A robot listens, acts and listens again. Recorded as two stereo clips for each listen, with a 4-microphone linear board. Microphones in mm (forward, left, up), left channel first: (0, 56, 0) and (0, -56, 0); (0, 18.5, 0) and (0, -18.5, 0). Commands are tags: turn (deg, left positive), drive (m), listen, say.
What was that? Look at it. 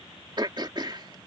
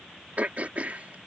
<turn deg="-40"/>
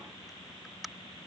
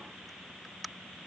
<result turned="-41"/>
<say>Facing the throat clearing.</say>